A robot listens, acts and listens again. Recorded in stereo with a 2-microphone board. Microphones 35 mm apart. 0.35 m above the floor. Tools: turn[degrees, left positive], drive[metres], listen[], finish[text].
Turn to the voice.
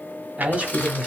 Thought: The man speaking: about 30° right or 150° right.
Action: turn[-30]
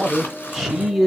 Action: finish[Found it: a man speaking, straight ahead, 1 to 2 m away.]